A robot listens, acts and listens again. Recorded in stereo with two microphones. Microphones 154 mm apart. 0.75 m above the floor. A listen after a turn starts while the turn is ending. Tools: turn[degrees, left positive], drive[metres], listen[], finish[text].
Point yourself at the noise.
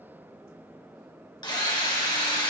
Thought: The drill: about 25° left or 155° left.
Action: turn[25]
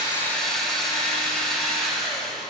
Action: finish[Found it: a drill, straight ahead, 2 to 4 m away.]